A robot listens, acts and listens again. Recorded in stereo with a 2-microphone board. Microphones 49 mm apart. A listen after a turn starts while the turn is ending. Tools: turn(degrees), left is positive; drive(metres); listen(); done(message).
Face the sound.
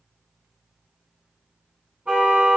turn(degrees=-30)
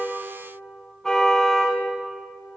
done("Facing the car horn.")